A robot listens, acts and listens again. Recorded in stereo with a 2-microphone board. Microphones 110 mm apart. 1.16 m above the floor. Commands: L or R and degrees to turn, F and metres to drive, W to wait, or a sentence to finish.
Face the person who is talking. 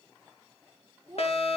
R30
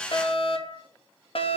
W
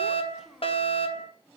Facing the child speaking.